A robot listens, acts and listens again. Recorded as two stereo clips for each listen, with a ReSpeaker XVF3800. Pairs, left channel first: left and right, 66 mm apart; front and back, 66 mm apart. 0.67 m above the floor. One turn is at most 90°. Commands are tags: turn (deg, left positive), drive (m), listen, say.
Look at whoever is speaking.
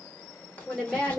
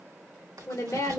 <say>Found it: a woman speaking, straight ahead.</say>